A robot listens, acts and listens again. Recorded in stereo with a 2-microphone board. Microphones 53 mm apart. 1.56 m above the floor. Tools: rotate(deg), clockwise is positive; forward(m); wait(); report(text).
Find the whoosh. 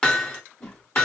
rotate(-30)
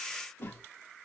rotate(-135)
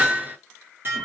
report("Facing the whoosh.")